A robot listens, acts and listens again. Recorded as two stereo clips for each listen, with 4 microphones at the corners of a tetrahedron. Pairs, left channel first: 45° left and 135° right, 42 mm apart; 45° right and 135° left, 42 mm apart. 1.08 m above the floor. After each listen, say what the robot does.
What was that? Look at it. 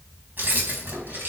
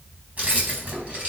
Turn 175° right.
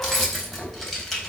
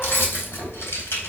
Turn 35° right.
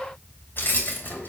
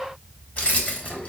Found it: keys jangling, straight ahead.